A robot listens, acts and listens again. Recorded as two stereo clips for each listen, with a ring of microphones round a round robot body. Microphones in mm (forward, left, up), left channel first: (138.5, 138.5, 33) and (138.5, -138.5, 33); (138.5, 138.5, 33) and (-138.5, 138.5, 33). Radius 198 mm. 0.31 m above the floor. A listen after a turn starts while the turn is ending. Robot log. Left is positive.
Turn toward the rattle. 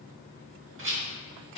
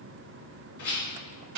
note: The rattle: 55° right.
cmd yaw -55
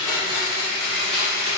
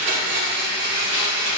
cmd idle
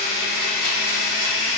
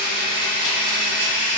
cmd idle
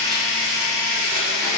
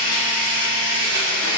end: Facing where the rattle came from. I can't hear it now.